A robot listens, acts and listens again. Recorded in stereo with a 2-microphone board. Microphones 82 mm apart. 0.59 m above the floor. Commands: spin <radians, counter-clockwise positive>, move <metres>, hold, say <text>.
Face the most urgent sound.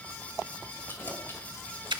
hold
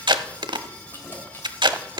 hold
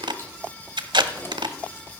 say I can't make out anything urgent to turn to.